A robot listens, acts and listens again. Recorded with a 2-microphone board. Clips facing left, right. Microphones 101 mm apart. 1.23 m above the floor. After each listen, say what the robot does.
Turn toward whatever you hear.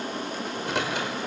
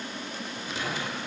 Turn 70° left.
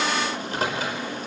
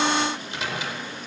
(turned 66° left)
Turn 45° left.
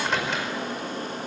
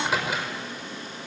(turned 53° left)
Facing the microwave, over 4 m away.